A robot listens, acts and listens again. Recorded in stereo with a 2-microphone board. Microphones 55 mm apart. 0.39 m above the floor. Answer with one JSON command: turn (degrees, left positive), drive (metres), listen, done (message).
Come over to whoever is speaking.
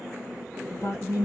{"turn": 60}
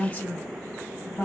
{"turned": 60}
{"turn": 30}
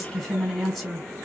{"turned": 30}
{"drive": 1.0}
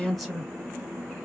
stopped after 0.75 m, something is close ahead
{"done": "I am next to the woman speaking."}